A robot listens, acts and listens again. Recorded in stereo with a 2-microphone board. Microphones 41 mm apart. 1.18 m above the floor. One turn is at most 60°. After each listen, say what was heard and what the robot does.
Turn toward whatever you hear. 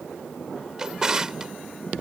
The drawer: about 15° right or 165° right. Turn 15° right.
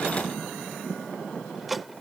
Facing the drawer.